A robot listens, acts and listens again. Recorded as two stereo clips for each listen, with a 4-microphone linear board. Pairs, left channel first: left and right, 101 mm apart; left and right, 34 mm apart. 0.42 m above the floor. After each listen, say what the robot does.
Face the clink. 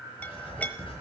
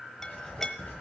Turn 15° left.
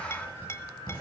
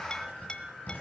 Turn 150° left.
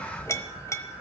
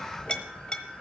Turn 30° left.
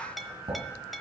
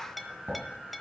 Facing the clink.